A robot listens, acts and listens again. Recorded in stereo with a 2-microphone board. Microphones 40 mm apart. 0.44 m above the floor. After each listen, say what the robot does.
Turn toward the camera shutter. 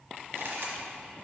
Turn 90° right.
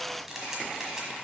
Turn 10° right.
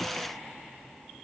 Keep listening.
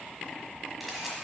Found it: a camera shutter, straight ahead.